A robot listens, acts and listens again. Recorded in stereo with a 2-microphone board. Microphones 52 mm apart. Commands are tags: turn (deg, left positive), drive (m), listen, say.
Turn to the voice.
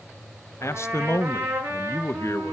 <turn deg="60"/>
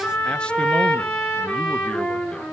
<listen/>
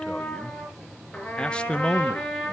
<turn deg="20"/>
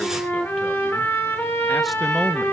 <listen/>
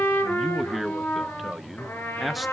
<say>Found it: a man speaking, straight ahead.</say>